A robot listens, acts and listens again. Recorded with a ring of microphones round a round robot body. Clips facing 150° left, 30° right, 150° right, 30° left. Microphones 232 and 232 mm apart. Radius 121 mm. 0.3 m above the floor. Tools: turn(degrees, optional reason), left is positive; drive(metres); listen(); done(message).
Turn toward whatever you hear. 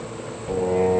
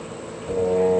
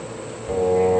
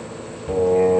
turn(degrees=60, reason="The singing: 60° left.")
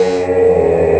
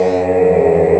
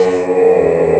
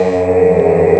turn(degrees=25, reason="The singing is now 25° left.")
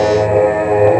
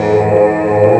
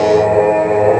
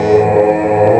done("Facing the singing, 1 to 2 m away.")